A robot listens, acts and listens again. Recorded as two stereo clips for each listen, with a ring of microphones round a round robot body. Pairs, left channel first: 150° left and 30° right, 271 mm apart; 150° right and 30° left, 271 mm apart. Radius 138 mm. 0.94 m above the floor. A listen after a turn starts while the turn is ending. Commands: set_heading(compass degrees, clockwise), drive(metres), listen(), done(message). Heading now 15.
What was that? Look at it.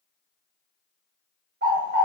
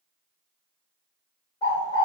set_heading(90)
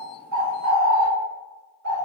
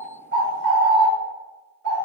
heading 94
done("Facing the bird.")